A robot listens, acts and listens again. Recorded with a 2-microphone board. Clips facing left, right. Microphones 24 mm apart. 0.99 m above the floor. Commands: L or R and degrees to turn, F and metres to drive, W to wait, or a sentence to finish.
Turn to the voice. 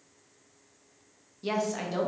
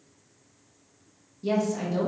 L30
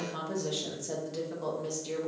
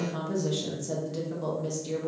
Facing the woman speaking.